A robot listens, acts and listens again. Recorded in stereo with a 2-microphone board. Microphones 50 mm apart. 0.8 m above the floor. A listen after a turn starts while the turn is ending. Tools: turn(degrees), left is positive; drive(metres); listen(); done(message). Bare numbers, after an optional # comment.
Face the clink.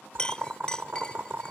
# The clink: about 15° left or 165° left.
turn(15)
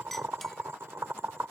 listen()
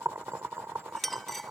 done("Found it: a clink, straight ahead.")